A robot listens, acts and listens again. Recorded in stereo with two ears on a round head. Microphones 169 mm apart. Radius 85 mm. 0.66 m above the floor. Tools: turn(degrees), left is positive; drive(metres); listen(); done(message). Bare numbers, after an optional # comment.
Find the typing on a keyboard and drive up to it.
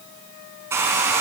listen()
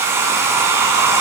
listen()
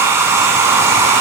done("I can't make out typing on a keyboard, only a hair dryer.")